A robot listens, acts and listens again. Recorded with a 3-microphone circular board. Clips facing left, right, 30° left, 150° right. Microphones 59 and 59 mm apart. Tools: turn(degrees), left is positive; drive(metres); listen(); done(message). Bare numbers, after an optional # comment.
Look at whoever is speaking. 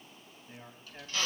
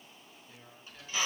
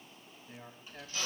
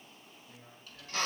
# The man speaking: 40° left.
turn(40)
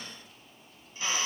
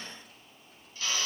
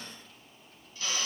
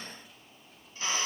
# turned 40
listen()
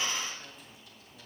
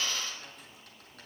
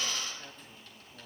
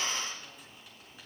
listen()
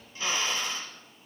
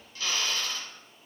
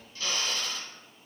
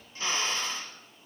done("I heard a man speaking from this way, but can't make it out now.")